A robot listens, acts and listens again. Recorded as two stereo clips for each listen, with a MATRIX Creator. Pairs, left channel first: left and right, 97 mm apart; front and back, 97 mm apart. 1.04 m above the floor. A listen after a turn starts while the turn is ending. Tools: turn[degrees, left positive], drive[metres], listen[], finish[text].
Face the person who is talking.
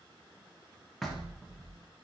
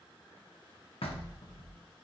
Action: listen[]
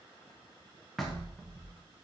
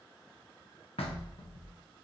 Action: listen[]
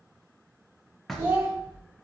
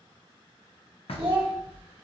Thought: The child speaking: 155° right.
Action: turn[-155]
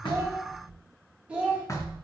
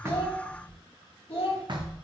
Thought: The child speaking is now 15° right.
Action: turn[-15]
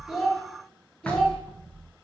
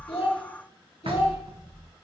Action: listen[]
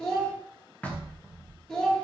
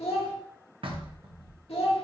Action: finish[Found it: a child speaking, straight ahead.]